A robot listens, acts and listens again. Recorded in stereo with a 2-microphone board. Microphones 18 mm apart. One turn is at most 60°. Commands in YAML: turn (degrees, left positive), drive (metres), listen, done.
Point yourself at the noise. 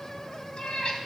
turn: 60
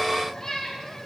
turn: 25
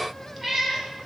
turn: -20
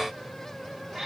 turn: -25
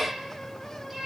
turn: -20
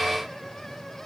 listen: true
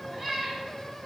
done: "Found it: a cat meowing, straight ahead, 2 to 4 m away."